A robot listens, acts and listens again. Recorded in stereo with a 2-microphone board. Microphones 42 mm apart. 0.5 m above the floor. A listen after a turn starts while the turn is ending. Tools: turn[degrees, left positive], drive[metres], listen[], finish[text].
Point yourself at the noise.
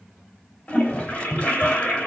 Thought: The toilet flushing: about 40° left or 140° left.
Action: turn[40]
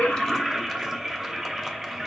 Action: finish[Facing the toilet flushing, 2 to 4 m away.]